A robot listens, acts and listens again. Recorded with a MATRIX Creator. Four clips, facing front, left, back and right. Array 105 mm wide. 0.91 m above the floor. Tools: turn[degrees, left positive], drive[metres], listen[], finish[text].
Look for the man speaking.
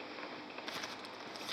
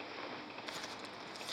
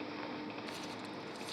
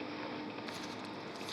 Action: listen[]
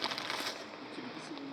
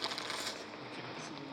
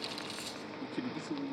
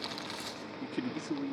Thought: The man speaking: 100° right.
Action: turn[-100]
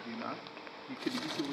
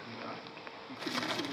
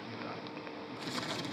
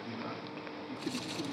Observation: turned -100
Thought: The man speaking is now 10° left.
Action: turn[10]
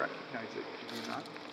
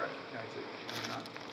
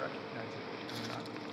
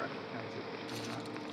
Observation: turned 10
Thought: The man speaking is now 15° left.
Action: turn[15]
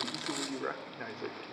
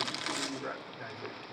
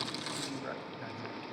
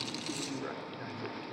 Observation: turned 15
Action: finish[Found it: a man speaking, straight ahead.]